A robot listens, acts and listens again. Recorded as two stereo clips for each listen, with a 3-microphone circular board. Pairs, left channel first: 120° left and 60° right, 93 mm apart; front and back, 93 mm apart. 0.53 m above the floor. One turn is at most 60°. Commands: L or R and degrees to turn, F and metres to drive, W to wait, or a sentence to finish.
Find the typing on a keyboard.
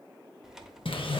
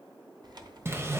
R60
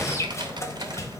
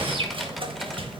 R60
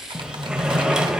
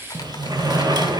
R30
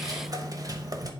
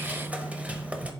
W
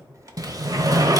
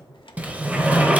R10
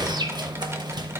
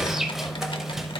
W
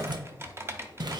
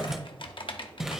Facing the typing on a keyboard, under 1 m away.